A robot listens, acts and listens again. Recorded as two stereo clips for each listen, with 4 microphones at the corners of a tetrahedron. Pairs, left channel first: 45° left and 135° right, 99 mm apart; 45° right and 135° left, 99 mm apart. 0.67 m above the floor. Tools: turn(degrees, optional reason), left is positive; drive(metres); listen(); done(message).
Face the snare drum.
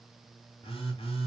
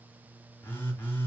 listen()
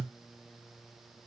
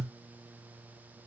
listen()
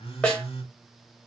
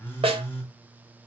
turn(degrees=125, reason="The snare drum: 125° left.")
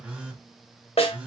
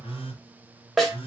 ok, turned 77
turn(degrees=45, reason="The snare drum is now 45° left.")
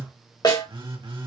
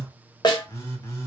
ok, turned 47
done("Found it: a snare drum, straight ahead.")